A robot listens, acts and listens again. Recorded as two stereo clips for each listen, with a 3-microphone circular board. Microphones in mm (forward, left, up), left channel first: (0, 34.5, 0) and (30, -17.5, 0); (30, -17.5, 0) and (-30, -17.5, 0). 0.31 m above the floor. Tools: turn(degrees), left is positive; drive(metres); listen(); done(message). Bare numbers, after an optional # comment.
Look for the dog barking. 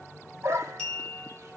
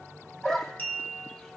# The dog barking: 80° right.
turn(-80)
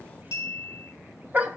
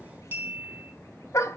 done("Facing the dog barking.")